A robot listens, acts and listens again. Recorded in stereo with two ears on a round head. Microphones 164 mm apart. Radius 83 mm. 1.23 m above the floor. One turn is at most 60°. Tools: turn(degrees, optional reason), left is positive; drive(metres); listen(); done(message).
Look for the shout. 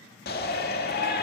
turn(degrees=60, reason="The shout: about 60° left or 120° left.")
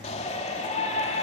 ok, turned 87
turn(degrees=35, reason="So it is at 35° left.")
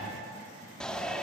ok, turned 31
done("Found it: a shout, straight ahead, 2 to 4 m away.")